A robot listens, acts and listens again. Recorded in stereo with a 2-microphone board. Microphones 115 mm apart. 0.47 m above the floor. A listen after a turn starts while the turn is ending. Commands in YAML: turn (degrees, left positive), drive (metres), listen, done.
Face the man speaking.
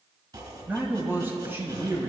turn: -25
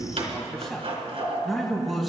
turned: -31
done: "Found it: a man speaking, straight ahead, 2 to 4 m away."